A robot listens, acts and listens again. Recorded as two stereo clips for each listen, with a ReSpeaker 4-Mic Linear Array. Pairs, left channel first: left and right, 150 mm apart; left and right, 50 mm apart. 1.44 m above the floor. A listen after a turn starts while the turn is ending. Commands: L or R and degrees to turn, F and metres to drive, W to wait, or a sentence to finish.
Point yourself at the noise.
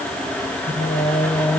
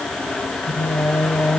L45
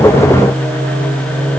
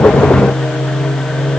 L110
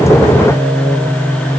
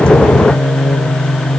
L20
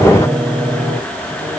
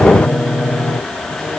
Found it: singing, straight ahead.